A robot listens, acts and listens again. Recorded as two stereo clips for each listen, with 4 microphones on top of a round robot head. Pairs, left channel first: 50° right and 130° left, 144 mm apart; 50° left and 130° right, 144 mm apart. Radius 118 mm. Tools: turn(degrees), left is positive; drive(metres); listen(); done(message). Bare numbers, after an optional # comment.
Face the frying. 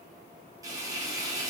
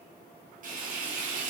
# The frying: 160° right.
turn(-160)
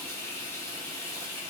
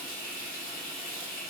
# The frying is now 25° left.
turn(25)
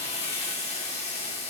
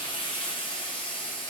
done("Facing the frying.")